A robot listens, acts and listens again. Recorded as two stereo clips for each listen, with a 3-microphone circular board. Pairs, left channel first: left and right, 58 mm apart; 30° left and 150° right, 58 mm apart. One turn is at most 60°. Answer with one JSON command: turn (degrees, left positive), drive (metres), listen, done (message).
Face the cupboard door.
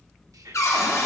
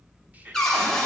{"turn": 60}
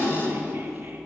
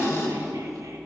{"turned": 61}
{"turn": 45}
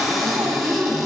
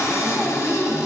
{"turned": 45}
{"done": "Facing the cupboard door."}